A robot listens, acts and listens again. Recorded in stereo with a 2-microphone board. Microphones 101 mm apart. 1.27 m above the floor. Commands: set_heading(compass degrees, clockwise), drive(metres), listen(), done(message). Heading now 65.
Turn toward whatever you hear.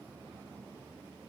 listen()
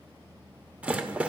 set_heading(95)
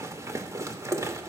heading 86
set_heading(226)
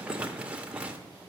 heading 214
set_heading(229)
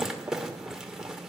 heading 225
done("Found it: a rattle, straight ahead.")